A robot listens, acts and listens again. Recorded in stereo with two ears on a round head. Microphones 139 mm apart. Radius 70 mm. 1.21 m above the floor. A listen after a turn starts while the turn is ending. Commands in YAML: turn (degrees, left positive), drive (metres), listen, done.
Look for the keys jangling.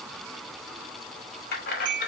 turn: 60
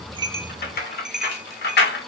turn: 70
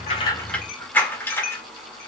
turn: 15
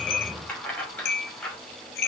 turn: 10
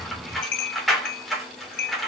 done: "Found it: keys jangling, straight ahead, 2 to 4 m away."